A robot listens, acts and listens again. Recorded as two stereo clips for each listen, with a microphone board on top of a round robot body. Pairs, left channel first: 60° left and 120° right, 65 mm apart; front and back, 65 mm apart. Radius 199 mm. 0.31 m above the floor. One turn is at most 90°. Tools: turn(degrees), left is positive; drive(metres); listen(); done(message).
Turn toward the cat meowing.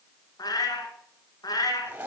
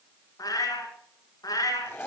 turn(degrees=35)
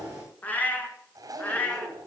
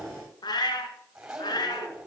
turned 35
turn(degrees=-10)
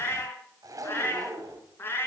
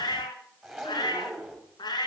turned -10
done("Facing the cat meowing.")